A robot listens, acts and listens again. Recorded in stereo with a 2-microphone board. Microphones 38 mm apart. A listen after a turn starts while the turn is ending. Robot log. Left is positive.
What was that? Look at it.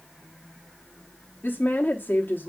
note: The woman speaking: about 55° left or 125° left.
cmd yaw +55
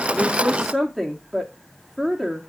end: Facing the woman speaking.